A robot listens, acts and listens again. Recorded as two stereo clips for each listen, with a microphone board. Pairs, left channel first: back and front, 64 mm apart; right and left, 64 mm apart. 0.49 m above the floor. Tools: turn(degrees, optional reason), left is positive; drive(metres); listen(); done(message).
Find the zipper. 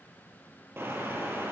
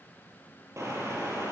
listen()
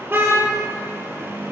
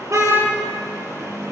listen()
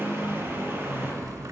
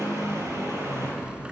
turn(degrees=20, reason="The zipper: 20° left.")
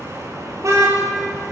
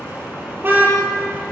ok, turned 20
listen()
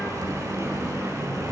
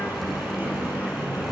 listen()
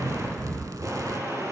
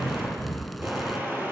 done("Facing the zipper, under 1 m away.")